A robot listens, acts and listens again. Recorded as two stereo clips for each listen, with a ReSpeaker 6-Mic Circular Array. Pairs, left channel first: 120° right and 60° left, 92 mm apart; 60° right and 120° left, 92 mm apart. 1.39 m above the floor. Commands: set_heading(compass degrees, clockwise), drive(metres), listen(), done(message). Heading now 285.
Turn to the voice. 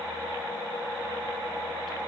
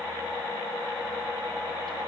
listen()
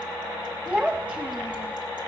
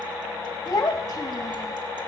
set_heading(300)
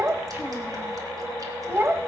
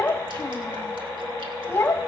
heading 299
done("Facing the child speaking.")